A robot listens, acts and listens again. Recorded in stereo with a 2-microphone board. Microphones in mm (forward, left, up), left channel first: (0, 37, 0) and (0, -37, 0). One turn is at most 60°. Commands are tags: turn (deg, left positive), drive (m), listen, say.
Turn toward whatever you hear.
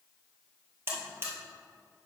<turn deg="-30"/>
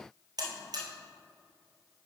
<turn deg="-60"/>
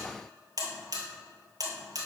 <turn deg="-55"/>
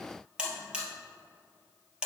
<turn deg="-10"/>
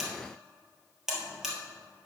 <say>Found it: a buzzer, straight ahead.</say>